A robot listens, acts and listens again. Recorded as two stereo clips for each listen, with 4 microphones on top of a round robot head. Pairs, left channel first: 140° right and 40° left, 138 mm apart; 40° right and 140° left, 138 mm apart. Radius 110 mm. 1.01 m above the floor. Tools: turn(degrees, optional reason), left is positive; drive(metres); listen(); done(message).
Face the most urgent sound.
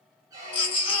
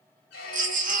turn(degrees=165, reason="The baby crying: 165° left.")
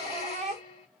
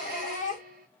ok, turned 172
done("Found it: a baby crying, straight ahead, 1 to 2 m away.")